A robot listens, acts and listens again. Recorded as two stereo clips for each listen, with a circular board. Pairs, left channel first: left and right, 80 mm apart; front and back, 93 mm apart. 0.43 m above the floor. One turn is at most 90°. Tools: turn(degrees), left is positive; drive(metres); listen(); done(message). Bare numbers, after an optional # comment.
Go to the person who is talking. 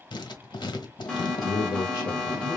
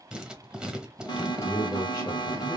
# The man speaking: 50° left.
turn(50)
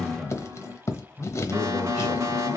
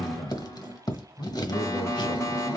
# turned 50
# The man speaking is now 10° right.
turn(-10)
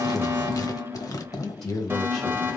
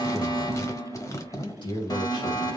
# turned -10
drive(1.0)
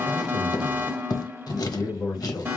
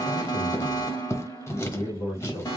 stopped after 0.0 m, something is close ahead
# The man speaking is now 10° left.
turn(10)
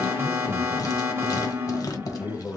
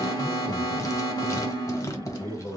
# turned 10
done("Something is in my way. I am facing the man speaking but have not reached it.")